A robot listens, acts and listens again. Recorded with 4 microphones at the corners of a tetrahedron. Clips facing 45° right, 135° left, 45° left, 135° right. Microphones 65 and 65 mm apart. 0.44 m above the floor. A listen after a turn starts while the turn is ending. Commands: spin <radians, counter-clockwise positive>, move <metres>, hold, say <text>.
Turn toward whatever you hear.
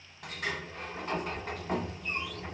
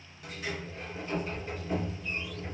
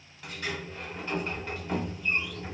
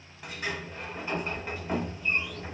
spin -1.13
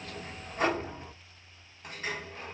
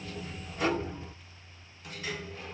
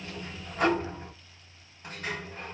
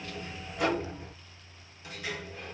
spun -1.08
say Facing the sliding door.